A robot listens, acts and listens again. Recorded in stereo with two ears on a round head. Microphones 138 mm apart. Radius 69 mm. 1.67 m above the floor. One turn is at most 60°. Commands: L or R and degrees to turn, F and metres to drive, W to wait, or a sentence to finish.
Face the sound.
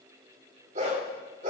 R45
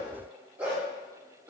R10
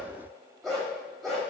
Found it: a dog barking, straight ahead, over 4 m away.